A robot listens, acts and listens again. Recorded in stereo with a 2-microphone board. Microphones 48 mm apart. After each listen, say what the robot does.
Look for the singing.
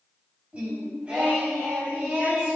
Turn 25° right.
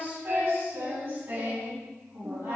Turn 130° right.
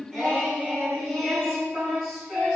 Turn 10° left.
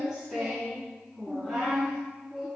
Found it: singing, straight ahead, over 4 m away.